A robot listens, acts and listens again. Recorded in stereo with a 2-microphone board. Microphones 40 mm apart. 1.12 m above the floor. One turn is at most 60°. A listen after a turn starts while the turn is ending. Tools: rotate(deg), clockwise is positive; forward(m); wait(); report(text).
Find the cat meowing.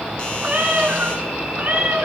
rotate(50)
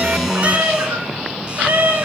rotate(60)
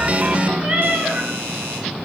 rotate(45)
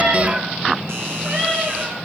rotate(20)
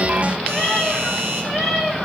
rotate(10)
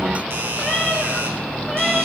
report("Found it: a cat meowing, straight ahead, over 4 m away.")